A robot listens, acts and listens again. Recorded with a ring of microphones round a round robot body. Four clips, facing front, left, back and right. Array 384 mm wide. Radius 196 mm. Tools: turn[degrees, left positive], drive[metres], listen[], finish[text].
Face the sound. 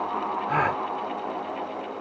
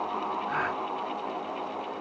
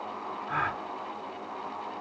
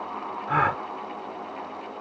Thought: The gasp: 50° right.
Action: turn[-50]
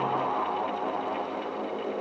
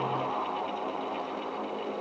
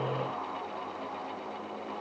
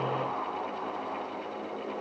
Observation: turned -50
Action: finish[Facing where the gasp came from. I can't hear it now.]